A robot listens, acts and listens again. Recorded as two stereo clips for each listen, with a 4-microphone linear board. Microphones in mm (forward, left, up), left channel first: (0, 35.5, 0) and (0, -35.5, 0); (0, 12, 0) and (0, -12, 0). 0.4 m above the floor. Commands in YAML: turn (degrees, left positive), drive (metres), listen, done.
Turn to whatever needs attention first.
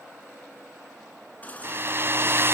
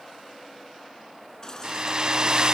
turn: 20
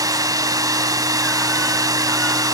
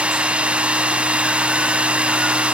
listen: true
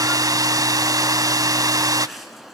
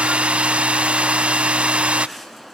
done: "Found it: a baby crying, straight ahead, 2 to 4 m away."